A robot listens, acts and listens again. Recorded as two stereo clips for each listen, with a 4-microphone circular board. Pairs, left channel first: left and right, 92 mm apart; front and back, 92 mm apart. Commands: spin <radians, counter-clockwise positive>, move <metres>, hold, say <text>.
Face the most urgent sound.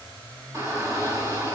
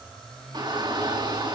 spin -2.53
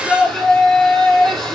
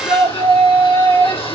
say Found it: a shout, straight ahead.